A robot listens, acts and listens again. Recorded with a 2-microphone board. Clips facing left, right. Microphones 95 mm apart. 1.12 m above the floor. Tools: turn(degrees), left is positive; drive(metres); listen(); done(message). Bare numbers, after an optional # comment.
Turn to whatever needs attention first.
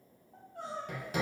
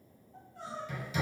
# The crying: about 55° left or 125° left.
turn(55)
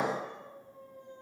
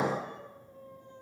# So it is at 70° left.
turn(70)
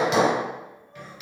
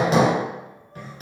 listen()
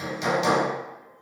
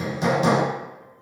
listen()
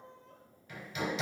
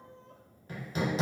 done("Found it: crying, straight ahead.")